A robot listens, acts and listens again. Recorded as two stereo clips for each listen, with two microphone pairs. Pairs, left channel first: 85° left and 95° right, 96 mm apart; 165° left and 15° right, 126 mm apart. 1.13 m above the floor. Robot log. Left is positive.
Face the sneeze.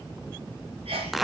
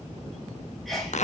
note: The sneeze: 105° right.
cmd yaw -105
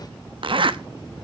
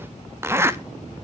end: Facing where the sneeze came from. I can't hear it now.